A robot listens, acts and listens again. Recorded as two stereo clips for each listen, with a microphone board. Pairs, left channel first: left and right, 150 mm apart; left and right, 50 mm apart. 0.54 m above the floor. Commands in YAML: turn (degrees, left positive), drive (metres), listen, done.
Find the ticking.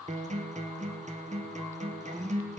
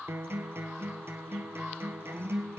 listen: true
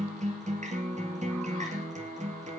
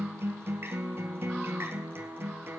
listen: true
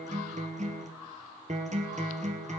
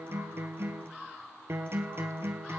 done: "I can't make out ticking, only a guitar."